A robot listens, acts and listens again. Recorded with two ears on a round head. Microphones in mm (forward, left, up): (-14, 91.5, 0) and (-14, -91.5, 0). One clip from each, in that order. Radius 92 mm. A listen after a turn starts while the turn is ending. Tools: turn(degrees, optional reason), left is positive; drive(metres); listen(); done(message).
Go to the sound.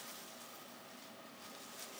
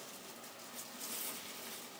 listen()
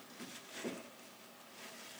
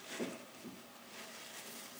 listen()
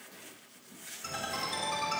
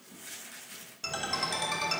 turn(degrees=-90)
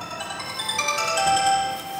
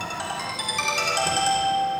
turn(degrees=-10, reason="So it is at 10° right.")
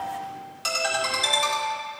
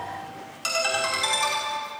drive(metres=1.0)
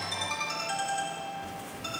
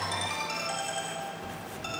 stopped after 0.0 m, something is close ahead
turn(degrees=-10, reason="The ringtone is now 10° right.")
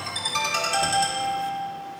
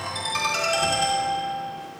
done("Something is in my way. I am facing the ringtone but have not reached it.")